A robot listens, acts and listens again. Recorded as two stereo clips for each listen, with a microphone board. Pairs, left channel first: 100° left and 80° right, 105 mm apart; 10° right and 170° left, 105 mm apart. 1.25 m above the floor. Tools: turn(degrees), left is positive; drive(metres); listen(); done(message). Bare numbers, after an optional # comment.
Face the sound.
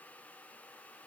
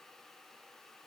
listen()
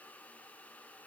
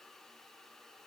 listen()
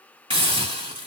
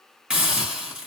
# The hiss: 110° right.
turn(-110)
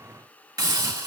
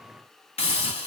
# The hiss is now 25° right.
turn(-25)
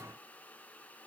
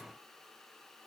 listen()
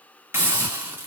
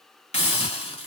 # The hiss is now 10° right.
turn(-10)
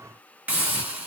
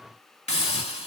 done("Facing the hiss, 1 to 2 m away.")